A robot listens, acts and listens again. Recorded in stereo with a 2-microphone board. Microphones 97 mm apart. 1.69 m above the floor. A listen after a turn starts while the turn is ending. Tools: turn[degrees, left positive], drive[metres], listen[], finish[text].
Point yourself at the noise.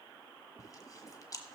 Thought: The chewing: about 35° left or 145° left.
Action: turn[35]
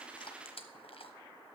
Thought: So it is at 110° left.
Action: turn[110]
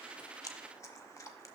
Thought: The chewing is now 35° left.
Action: turn[35]
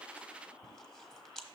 Action: finish[Found it: chewing, straight ahead.]